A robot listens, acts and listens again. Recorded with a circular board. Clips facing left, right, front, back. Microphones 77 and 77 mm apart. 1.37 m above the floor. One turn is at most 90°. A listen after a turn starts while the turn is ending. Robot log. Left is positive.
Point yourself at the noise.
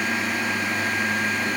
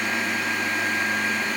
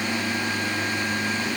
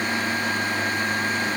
cmd idle
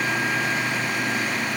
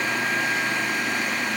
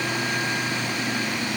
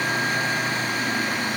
cmd idle
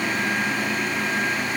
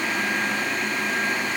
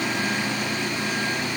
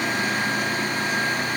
end: I can't make out anything to turn to.